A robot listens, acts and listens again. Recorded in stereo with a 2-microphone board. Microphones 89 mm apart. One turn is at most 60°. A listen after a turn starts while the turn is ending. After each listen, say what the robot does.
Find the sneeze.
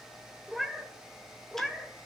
Keep listening.
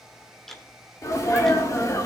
Turn 35° left.
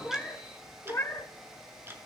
Keep listening.
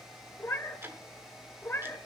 I heard a sneeze, but can't make it out now. It was about straight ahead or 110° left.